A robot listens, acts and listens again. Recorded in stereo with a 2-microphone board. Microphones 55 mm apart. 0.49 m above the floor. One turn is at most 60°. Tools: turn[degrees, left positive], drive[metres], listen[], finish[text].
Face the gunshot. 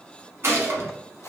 Thought: The gunshot: about 55° right or 125° right.
Action: turn[-55]
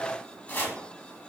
Action: listen[]
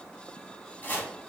Action: finish[I heard a gunshot, but can't make it out now. It was about straight ahead or 70° right.]